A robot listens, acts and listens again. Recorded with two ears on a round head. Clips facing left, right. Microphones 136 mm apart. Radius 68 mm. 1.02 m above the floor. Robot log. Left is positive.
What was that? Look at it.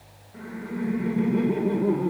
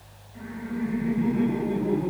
cmd yaw +90
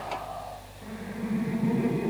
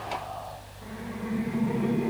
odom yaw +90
note: So it is at 15° left.
cmd yaw +15
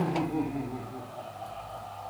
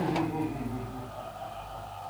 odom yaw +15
end: Found it: laughter, straight ahead.